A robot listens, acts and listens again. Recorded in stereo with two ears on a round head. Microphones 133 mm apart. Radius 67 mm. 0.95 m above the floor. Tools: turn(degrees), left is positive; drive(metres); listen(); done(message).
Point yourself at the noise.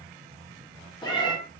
turn(degrees=30)
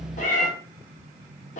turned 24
turn(degrees=125)
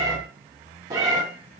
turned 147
turn(degrees=-20)
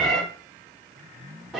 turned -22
done("Facing the cat meowing, 1 to 2 m away.")